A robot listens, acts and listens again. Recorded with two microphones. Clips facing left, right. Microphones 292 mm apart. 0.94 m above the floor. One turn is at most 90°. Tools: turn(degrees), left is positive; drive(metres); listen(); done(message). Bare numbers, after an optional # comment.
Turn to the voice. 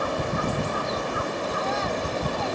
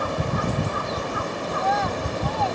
# The child speaking: about 70° right or 110° right.
turn(-70)
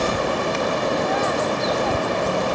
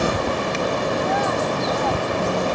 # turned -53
listen()
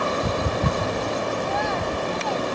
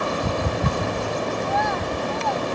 # So it is at 60° right.
turn(-60)
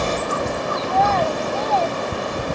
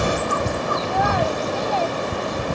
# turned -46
# The child speaking is now 10° right.
turn(-10)
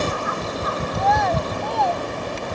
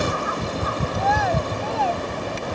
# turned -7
done("Facing the child speaking.")